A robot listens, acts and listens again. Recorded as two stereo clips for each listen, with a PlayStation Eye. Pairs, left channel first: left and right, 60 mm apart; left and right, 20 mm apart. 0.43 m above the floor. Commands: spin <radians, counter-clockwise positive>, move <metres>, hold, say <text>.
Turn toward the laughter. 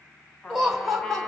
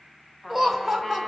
spin 0.52
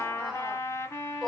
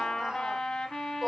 spin 0.52
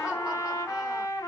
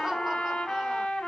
spin -0.17
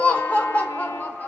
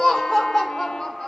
spin 0.61
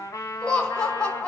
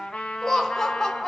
spin 0.35
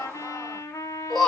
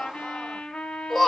say Found it: laughter, straight ahead, 1 to 2 m away.